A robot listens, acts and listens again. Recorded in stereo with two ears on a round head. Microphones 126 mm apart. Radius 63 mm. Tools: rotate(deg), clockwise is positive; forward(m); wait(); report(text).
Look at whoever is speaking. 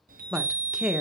rotate(30)
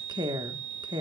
rotate(145)
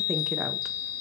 wait()
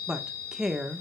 report("Found it: a woman speaking, straight ahead, 1 to 2 m away.")